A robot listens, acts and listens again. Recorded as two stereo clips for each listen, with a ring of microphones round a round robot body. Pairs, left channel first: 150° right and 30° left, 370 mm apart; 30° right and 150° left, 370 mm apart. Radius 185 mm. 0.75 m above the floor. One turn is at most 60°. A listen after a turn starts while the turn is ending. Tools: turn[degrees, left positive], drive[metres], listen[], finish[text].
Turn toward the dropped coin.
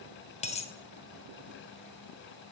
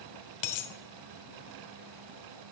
Thought: The dropped coin: 75° right.
Action: turn[-60]
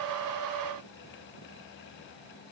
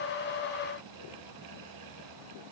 Thought: Nothing new. It was at 15° right.
Action: turn[-15]
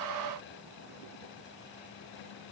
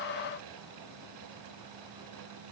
Action: finish[Facing where the dropped coin came from. I can't hear it now.]